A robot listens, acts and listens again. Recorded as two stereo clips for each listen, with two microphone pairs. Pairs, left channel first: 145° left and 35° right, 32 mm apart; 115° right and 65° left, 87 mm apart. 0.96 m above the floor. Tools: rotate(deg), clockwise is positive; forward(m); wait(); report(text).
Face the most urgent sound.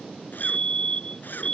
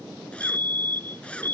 rotate(-90)
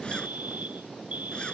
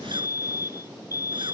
report("Facing the fire alarm.")